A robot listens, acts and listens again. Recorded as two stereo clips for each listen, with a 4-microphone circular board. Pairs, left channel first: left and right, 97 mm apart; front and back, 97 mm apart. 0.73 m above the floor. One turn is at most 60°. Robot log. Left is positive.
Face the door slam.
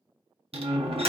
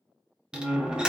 note: The door slam: 100° right.
cmd yaw -60
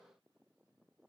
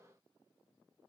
note: Nothing new. It was at 40° right.
cmd yaw -40
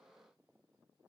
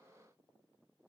end: Facing where the door slam came from. I can't hear it now.